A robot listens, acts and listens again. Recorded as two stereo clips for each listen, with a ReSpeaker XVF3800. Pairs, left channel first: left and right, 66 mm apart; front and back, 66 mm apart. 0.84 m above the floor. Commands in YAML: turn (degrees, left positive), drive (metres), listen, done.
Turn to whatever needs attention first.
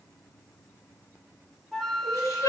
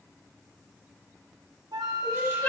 turn: 55
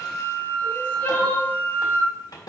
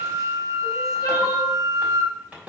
listen: true
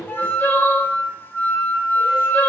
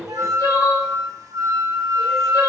turn: 30
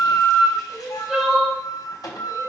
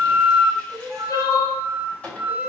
turn: -10
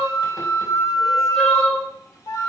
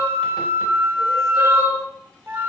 done: "Facing the crying."